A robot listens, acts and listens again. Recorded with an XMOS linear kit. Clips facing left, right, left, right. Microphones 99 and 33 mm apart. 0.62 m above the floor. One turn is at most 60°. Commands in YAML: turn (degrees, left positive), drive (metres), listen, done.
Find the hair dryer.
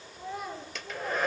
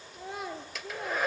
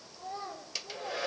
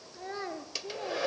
turn: -30
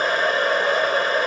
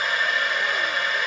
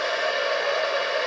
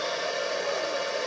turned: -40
turn: 35
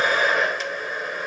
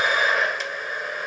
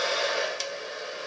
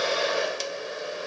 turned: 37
done: "Facing the hair dryer, 1 to 2 m away."